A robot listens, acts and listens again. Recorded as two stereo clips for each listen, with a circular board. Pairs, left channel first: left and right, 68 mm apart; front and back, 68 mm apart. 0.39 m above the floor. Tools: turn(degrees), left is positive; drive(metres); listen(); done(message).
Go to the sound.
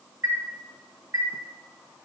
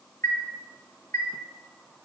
turn(degrees=-40)
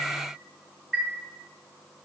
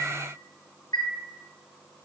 drive(metres=1.0)
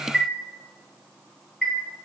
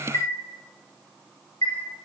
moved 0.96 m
drive(metres=1.0)
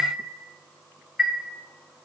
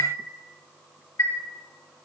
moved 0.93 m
drive(metres=1.0)
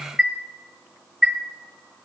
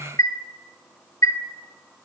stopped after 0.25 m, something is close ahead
done("Arrived at the chime, straight ahead.")